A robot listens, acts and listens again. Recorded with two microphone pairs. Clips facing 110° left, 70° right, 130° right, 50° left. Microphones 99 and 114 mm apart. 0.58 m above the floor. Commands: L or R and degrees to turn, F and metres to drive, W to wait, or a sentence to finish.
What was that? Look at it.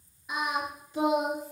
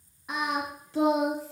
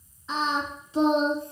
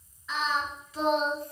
R65
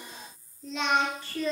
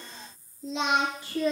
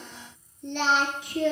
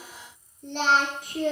Facing the singing.